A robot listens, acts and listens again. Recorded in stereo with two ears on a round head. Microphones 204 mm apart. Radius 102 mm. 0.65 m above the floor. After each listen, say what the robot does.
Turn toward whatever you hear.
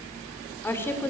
Turn 30° left.
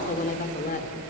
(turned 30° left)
Turn 140° left.
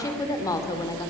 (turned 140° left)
Turn 15° left.
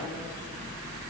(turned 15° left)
Keep listening.
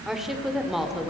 Facing the woman speaking.